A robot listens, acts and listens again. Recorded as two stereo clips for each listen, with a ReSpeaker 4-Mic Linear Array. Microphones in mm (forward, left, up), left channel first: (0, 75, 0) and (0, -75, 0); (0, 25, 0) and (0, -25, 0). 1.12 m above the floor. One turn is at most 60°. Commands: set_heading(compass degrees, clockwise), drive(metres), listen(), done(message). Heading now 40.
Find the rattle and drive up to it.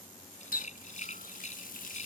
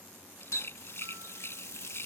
set_heading(350)
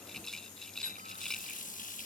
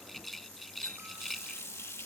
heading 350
drive(1.0)
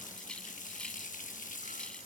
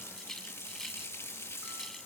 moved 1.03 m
listen()
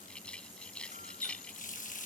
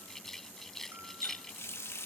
drive(1.0)
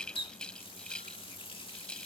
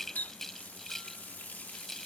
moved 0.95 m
drive(1.0)
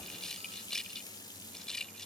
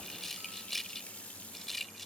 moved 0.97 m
drive(1.0)
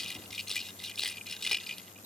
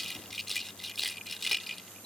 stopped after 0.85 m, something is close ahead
done("Arrived at the rattle, straight ahead.")